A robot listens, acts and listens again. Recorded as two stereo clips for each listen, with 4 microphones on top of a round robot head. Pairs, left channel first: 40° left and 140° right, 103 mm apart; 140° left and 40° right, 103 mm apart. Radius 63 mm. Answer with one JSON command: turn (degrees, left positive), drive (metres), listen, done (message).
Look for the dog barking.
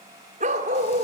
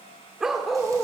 {"turn": -135}
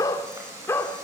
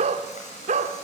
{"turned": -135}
{"turn": -30}
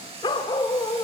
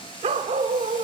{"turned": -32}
{"turn": -15}
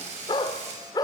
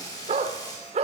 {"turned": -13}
{"turn": -15}
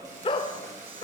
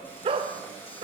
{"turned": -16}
{"done": "Facing the dog barking."}